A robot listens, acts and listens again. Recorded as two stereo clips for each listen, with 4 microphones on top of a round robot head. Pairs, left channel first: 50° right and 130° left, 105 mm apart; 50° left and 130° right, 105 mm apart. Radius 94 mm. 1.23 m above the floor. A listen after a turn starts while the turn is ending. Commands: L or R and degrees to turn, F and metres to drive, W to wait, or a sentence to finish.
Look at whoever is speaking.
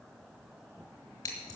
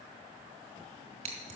W
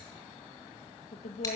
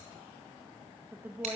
R55
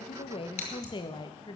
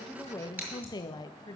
Found it: a woman speaking, straight ahead.